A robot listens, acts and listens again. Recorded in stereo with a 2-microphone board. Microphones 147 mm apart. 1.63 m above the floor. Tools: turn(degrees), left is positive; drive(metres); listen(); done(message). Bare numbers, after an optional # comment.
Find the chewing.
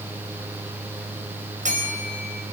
listen()
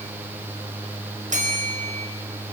listen()
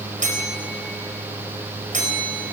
done("I can't make out chewing to turn to.")